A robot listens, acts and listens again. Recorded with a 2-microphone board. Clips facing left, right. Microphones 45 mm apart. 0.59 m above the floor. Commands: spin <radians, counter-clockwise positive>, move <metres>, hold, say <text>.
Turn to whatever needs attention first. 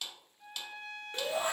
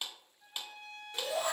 spin 0.61
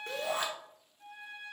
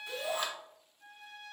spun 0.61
spin 1.83
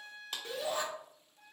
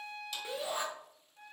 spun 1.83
spin -0.35
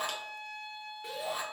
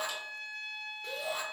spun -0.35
say Found it: a shout, straight ahead.